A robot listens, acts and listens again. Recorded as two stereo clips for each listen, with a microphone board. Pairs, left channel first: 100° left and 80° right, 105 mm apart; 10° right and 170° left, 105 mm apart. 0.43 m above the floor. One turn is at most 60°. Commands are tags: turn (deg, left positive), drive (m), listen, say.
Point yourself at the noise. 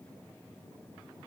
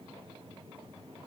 <listen/>
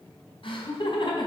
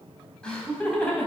<turn deg="60"/>
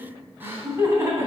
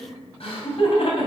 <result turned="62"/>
<turn deg="-20"/>
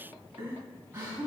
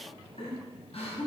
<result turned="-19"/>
<turn deg="-15"/>
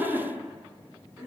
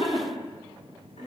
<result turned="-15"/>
<say>Facing the laughter.</say>